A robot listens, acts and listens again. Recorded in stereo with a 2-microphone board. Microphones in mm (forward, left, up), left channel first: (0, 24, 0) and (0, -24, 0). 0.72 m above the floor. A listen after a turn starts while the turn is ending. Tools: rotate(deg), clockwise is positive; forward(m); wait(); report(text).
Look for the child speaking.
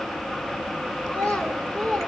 rotate(-30)
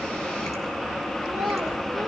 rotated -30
wait()
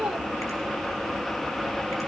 rotate(15)
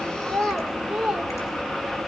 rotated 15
report("Found it: a child speaking, straight ahead, 1 to 2 m away.")